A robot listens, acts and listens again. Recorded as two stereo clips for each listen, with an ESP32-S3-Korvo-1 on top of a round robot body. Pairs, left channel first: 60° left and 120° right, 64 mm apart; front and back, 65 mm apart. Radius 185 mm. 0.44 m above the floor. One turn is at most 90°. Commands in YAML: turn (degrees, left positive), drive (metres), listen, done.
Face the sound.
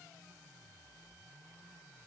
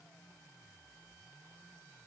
listen: true
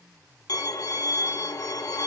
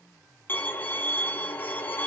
turn: 55
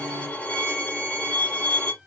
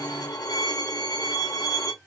turn: -10
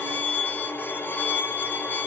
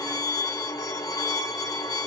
done: "Facing the violin."